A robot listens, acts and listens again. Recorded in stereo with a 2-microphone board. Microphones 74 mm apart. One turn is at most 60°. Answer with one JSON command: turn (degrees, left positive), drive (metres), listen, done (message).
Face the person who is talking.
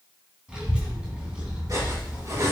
{"turn": -30}
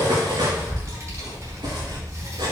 {"turn": -60}
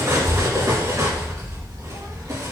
{"turn": -60}
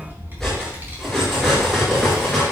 {"turn": -30}
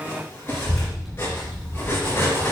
{"done": "Found it: a child speaking, straight ahead, 2 to 4 m away."}